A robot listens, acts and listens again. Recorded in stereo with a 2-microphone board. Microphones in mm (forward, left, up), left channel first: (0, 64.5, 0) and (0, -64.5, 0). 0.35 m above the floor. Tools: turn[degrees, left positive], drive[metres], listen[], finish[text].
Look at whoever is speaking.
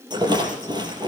Action: listen[]
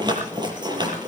Action: listen[]
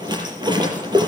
Action: finish[I can't make out anyone speaking to turn to.]